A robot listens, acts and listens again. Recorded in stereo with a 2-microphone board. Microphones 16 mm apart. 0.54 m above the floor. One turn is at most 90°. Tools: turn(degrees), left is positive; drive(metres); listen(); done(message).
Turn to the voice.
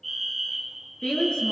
turn(degrees=90)
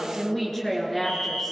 turn(degrees=10)
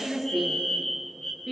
done("Facing the woman speaking.")